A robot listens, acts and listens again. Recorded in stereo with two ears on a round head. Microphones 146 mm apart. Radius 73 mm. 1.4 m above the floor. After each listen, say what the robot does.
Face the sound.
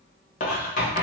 Turn 50° left.
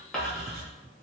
Found it: writing, straight ahead.